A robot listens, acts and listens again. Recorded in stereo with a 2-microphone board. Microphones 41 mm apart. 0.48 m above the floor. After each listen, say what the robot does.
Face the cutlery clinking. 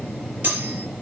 Turn 50° right.
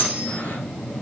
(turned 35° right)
Turn 15° right.
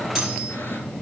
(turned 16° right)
Keep listening.
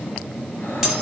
Facing the cutlery clinking, over 4 m away.